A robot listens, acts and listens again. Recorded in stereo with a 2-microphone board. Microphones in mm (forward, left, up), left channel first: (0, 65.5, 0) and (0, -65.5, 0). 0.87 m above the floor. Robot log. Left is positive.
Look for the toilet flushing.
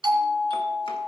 cmd idle
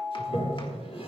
note: The toilet flushing: about 50° left or 130° left.
cmd yaw +50
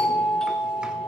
cmd idle
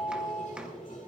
note: So it is at 80° left.
cmd yaw +80
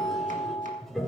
end: Found it: a toilet flushing, straight ahead.